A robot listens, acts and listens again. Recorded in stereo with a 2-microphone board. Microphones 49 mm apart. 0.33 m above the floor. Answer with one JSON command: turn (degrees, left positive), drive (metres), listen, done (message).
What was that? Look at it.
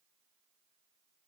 {"listen": true}
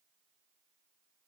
{"listen": true}
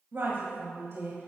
{"turn": -55}
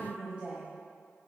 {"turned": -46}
{"turn": -25}
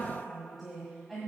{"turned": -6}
{"done": "Facing the woman speaking, 1 to 2 m away."}